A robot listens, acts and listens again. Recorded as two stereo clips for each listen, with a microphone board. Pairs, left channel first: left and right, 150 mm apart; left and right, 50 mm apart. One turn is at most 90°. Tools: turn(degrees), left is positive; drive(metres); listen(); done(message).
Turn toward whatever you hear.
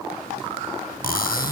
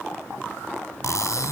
turn(degrees=90)
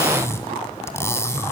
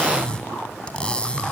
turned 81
turn(degrees=15)
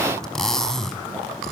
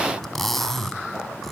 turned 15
done("Found it: cutlery clinking, straight ahead, 2 to 4 m away.")